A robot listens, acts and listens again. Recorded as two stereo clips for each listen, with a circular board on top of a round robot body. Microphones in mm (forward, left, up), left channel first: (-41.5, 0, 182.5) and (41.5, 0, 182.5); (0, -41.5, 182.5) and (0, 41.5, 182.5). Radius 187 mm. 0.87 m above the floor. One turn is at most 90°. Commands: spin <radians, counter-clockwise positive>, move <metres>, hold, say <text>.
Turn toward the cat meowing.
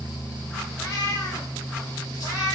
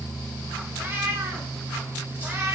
spin 1.57
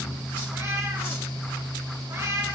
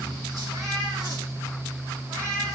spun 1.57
spin 0.79
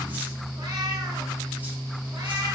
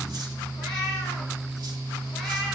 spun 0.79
spin -0.17
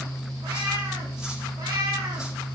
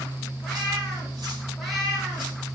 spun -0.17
say Found it: a cat meowing, straight ahead, over 4 m away.